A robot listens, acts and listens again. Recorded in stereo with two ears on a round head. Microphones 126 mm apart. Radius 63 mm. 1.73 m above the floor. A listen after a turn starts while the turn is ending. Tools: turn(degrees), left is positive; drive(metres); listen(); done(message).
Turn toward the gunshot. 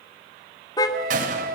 turn(degrees=-60)
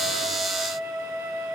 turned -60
listen()
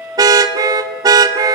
done("I heard a gunshot, but can't make it out now. It was about straight ahead or 60° right.")